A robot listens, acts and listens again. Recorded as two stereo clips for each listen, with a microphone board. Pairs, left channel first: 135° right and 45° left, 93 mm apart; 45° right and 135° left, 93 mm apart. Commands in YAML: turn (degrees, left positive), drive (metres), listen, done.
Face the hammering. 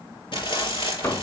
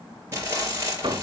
turn: 160
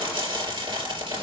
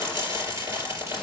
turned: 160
listen: true
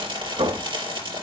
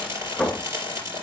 turn: 45
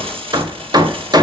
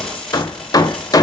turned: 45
done: "Facing the hammering."